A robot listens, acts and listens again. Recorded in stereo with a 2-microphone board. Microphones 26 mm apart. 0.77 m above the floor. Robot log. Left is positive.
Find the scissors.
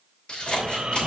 note: The scissors: about 45° left or 135° left.
cmd yaw +45
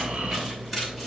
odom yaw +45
cmd idle
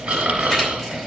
cmd idle
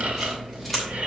end: Facing the scissors.